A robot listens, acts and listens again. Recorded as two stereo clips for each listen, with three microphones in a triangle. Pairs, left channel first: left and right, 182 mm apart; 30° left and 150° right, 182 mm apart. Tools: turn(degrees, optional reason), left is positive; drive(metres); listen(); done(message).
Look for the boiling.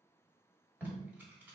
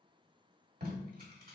listen()
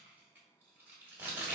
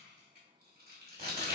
listen()
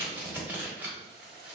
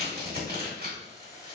turn(degrees=140, reason="The boiling: 140° left.")
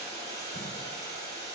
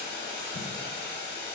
turn(degrees=20, reason="The boiling is now 20° left.")
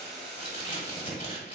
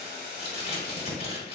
done("Facing the boiling, 1 to 2 m away.")